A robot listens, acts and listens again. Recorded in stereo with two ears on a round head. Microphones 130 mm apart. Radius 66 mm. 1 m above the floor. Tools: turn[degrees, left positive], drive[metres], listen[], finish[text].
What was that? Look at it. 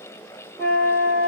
Thought: The flute: about 20° left or 160° left.
Action: turn[20]
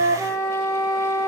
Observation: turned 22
Action: finish[Found it: a flute, straight ahead.]